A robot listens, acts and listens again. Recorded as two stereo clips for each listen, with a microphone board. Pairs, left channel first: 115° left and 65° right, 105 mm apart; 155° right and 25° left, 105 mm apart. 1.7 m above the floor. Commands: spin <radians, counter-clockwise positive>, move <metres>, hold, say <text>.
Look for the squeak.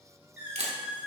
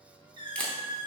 say Facing the squeak.